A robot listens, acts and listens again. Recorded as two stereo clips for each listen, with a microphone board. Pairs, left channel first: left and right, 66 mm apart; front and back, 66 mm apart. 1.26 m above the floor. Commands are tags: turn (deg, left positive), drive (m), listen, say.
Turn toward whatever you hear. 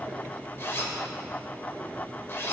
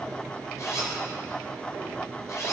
<turn deg="40"/>
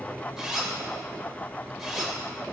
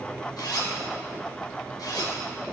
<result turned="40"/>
<say>Found it: a zipper, straight ahead, 2 to 4 m away.</say>